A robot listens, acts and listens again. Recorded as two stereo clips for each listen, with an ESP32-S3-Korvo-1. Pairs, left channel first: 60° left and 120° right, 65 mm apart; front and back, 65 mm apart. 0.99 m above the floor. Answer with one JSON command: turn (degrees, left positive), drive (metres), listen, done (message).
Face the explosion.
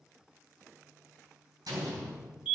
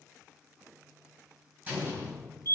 {"turn": -115}
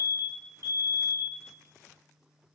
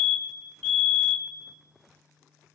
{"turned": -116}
{"done": "I heard an explosion from this way, but can't make it out now."}